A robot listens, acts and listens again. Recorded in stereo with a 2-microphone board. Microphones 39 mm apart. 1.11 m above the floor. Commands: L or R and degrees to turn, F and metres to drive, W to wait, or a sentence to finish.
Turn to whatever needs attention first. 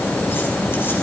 W
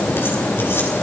W
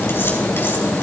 I can't make out anything urgent to turn to.